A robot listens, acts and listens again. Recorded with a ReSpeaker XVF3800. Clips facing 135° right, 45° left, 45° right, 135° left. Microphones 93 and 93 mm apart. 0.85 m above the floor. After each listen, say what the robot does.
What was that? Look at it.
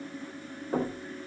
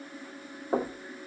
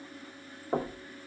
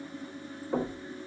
Turn 10° left.
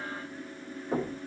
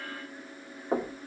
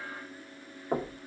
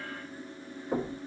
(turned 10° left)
Facing the knocking, 1 to 2 m away.